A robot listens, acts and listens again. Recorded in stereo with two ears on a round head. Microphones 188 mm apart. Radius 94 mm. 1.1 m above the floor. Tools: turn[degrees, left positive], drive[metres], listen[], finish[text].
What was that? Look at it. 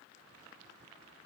Action: listen[]
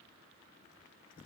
Action: listen[]
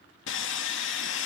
Thought: The sawing: about 65° left or 115° left.
Action: turn[65]
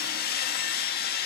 Thought: So it is at 50° left.
Action: turn[50]
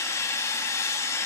Thought: The sawing is now 15° left.
Action: turn[15]
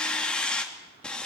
Action: finish[Found it: sawing, straight ahead.]